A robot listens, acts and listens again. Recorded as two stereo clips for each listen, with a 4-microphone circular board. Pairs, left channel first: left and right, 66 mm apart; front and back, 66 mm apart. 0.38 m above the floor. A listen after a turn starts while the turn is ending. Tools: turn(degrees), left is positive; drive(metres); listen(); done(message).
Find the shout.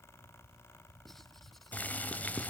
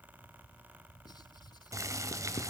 listen()
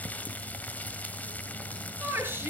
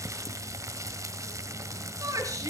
turn(degrees=-145)
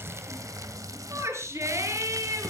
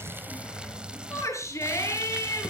turn(degrees=-45)
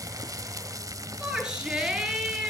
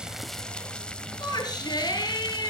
turn(degrees=-15)
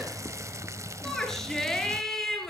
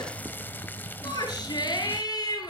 done("Facing the shout, over 4 m away.")